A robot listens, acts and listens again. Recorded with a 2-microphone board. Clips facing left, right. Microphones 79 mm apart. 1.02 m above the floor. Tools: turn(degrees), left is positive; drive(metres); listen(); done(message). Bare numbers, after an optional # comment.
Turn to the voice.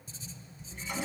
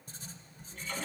listen()
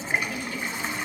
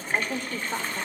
# The woman speaking: about 45° right or 135° right.
turn(-45)
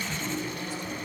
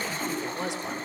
listen()
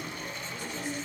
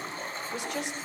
# So it is at 100° right.
turn(-100)
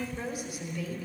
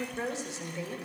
# The woman speaking is now 25° right.
turn(-25)
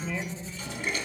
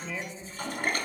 done("Found it: a woman speaking, straight ahead, over 4 m away.")